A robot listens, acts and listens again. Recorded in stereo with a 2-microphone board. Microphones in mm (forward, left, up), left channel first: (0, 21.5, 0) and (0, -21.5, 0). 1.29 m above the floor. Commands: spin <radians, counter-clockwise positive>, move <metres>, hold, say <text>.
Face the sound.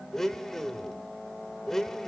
spin 0.52
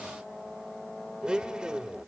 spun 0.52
spin -0.44
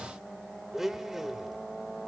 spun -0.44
spin -0.17
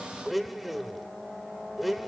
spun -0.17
say Facing the blender.